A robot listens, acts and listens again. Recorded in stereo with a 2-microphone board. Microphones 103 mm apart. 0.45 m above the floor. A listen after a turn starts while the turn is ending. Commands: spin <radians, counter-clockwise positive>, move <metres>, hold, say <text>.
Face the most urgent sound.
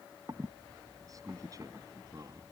hold
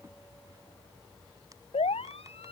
spin 1.57
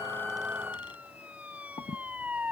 spin -0.26
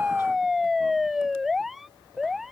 say Found it: a siren, straight ahead.